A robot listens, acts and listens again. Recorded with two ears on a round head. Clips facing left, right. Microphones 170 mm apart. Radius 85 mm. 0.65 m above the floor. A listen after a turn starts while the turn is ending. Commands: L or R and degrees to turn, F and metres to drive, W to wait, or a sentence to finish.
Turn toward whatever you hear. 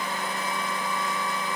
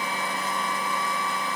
W
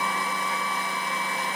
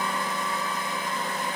W
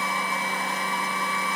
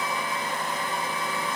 I can't make out anything.